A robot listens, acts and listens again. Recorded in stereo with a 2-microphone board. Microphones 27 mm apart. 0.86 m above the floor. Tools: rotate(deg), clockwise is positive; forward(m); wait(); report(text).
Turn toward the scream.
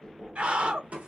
rotate(50)
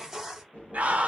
rotate(70)
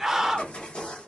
rotate(10)
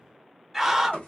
report("Facing the scream, 1 to 2 m away.")